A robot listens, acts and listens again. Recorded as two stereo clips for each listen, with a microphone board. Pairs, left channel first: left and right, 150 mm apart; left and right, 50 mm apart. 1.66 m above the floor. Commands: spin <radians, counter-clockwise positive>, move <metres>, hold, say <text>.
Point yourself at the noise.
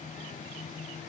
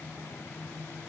hold
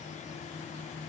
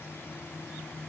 hold
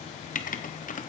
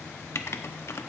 spin 1.05
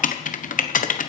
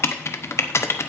spin 1.05
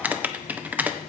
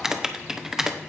spin -0.17
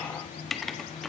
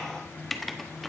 say Found it: writing, straight ahead.